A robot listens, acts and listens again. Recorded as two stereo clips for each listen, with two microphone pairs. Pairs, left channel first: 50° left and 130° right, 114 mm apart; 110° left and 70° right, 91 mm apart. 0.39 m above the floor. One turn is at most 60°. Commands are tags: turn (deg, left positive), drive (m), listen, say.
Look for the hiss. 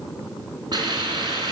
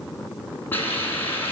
<turn deg="60"/>
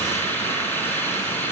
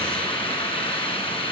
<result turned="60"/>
<turn deg="60"/>
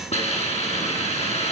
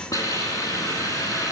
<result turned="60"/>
<turn deg="60"/>
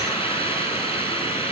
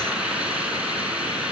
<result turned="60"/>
<turn deg="10"/>
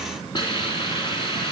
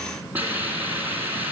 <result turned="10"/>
<say>Found it: a hiss, straight ahead, 2 to 4 m away.</say>